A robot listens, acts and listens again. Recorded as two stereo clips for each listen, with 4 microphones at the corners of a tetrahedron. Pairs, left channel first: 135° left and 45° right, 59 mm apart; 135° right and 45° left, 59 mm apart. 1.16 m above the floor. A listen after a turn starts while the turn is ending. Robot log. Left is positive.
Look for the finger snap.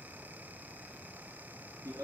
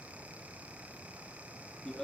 cmd idle
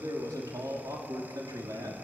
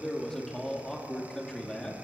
cmd idle
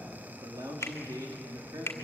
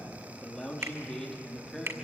note: The finger snap: 90° left.
cmd yaw +90
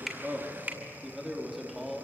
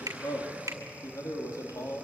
note: The finger snap is now 15° left.
cmd yaw +15
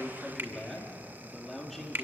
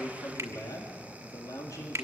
note: The finger snap is now 10° left.
cmd yaw +10
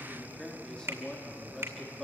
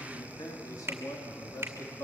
end: Found it: a finger snap, straight ahead, 2 to 4 m away.